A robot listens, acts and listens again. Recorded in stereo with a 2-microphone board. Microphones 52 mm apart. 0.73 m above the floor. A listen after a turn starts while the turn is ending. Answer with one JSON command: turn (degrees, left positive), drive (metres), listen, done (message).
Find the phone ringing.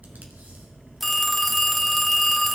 {"turn": 30}
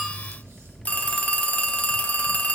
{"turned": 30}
{"turn": 150}
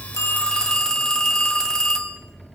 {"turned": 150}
{"turn": 10}
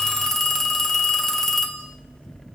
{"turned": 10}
{"done": "Facing the phone ringing, under 1 m away."}